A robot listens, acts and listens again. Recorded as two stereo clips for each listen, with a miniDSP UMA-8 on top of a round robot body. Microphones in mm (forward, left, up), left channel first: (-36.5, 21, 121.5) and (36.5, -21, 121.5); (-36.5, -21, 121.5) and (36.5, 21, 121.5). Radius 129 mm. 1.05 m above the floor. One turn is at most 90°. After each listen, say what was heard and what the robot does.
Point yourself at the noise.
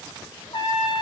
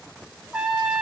The trumpet: 105° left. Turn 90° left.
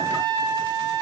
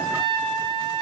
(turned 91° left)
The trumpet is now 15° left. Turn 15° left.
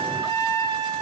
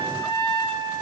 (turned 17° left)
Facing the trumpet, 1 to 2 m away.